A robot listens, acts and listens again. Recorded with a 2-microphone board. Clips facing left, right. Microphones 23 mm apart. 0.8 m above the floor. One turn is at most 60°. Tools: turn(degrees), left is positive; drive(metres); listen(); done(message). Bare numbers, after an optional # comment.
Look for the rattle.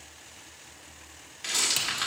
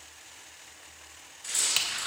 # The rattle: about 65° left or 115° left.
turn(60)
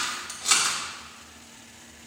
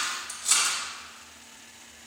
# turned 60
# So it is at 45° left.
turn(45)
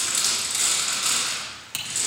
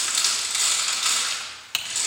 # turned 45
# The rattle is now 15° right.
turn(-15)
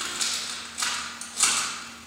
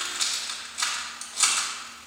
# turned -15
done("Facing the rattle.")